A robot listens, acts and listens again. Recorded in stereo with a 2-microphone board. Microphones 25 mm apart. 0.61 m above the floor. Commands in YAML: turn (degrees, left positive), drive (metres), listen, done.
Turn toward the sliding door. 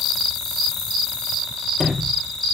turn: -25
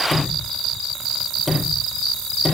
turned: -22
done: "Facing the sliding door."